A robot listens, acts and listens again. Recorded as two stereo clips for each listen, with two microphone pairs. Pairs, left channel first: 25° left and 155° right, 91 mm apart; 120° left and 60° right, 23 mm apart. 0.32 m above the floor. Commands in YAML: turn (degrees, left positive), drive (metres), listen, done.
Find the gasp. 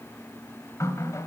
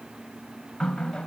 listen: true
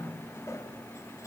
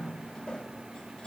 listen: true
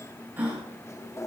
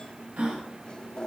turn: -80
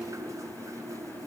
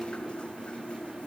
done: "I heard a gasp from this way, but can't make it out now."